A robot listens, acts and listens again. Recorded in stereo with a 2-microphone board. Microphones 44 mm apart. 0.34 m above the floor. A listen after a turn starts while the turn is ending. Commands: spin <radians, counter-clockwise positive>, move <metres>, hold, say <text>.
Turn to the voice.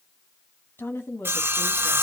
spin 1.13
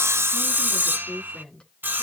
spin 0.44
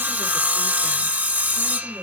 hold
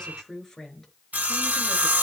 spin 0.17
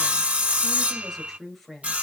say Found it: a woman speaking, straight ahead.